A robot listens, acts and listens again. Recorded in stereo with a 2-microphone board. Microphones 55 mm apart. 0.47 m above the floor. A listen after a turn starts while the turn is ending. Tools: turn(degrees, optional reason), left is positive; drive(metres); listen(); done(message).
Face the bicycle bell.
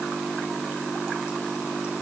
listen()
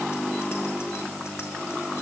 listen()
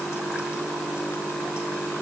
done("I can't make out a bicycle bell.")